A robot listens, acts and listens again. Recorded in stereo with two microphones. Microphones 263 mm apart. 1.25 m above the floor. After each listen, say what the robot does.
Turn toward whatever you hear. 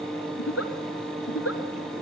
Turn 65° left.
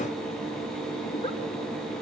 Keep listening.
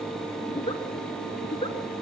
Turn 25° left.
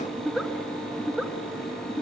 Facing the giggle, 2 to 4 m away.